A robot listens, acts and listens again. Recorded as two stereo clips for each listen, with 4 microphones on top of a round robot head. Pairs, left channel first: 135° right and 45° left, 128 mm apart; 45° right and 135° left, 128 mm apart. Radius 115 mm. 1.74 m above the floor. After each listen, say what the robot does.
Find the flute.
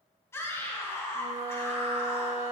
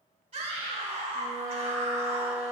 Turn 90° left.
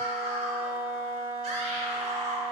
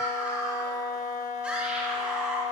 Turn 10° right.
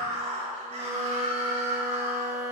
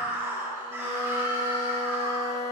Facing the flute, under 1 m away.